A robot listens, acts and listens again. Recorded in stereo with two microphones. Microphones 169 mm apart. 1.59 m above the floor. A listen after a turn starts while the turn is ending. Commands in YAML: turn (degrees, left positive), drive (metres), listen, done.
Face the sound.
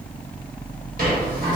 turn: -65
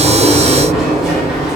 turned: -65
done: "Found it: a sliding door, straight ahead."